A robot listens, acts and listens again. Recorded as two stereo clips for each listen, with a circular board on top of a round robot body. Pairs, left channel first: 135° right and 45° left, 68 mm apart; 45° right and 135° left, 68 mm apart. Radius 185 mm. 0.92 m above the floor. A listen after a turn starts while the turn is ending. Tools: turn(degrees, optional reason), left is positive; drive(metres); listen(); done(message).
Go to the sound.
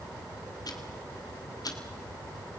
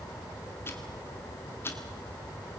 turn(degrees=-105, reason="The ticking: 105° right.")
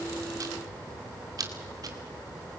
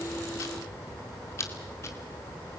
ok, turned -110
turn(degrees=10, reason="The ticking is now 10° left.")
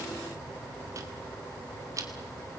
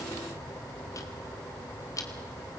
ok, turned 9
drive(metres=1.0)
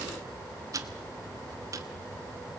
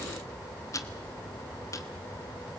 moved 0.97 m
drive(metres=1.0)
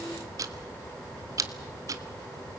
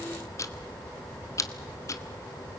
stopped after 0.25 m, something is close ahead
done("Arrived at the ticking, straight ahead.")